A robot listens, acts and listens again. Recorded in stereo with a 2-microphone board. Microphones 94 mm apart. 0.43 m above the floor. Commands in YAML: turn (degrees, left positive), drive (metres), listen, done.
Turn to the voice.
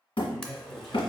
turn: 30
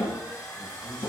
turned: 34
listen: true
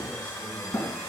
listen: true
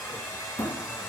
done: "I heard a man speaking, but can't make it out now. It was about 30° right or 140° left."